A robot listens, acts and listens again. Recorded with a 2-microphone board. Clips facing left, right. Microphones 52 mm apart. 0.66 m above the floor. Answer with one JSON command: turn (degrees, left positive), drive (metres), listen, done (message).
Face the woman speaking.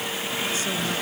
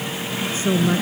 {"turn": -25}
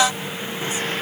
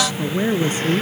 {"turn": -130}
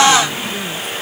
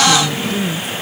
{"done": "Facing the woman speaking."}